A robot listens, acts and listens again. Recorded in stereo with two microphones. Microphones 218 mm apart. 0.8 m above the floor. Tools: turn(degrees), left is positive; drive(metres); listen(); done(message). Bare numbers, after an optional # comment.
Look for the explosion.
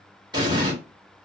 # The explosion: about 20° right or 160° right.
turn(-20)
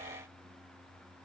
listen()
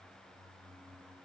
done("I heard an explosion, but can't make it out now. It was about straight ahead or 140° right.")